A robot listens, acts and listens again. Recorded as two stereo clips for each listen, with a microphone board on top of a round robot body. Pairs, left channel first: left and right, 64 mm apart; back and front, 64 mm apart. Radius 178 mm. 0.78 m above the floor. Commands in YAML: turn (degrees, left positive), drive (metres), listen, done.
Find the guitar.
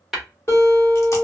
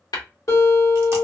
turn: 140
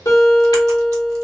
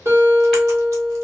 turn: 50
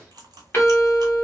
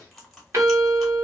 done: "Found it: a guitar, straight ahead."